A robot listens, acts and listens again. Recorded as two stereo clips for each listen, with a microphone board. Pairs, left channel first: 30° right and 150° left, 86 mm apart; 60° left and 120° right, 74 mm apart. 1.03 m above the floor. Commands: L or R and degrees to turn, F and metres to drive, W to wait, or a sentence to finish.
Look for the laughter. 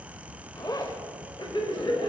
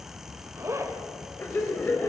Facing the laughter, over 4 m away.